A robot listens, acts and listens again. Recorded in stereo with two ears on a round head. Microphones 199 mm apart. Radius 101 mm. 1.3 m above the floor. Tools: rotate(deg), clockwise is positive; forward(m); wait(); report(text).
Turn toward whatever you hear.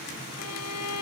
rotate(-90)
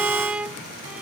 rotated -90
report("Facing the violin.")